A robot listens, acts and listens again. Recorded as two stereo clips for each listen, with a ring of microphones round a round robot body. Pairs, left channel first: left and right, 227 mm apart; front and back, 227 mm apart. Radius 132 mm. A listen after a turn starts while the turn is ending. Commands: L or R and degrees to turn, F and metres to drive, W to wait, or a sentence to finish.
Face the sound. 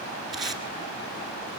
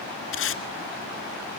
Facing the tape being pulled.